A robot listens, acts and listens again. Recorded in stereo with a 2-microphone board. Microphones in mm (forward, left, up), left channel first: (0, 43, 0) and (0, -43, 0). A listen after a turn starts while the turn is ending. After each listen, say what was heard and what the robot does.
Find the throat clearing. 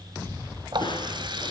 Keep listening.
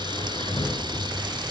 Keep listening.
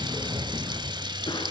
I can't make out throat clearing to turn to.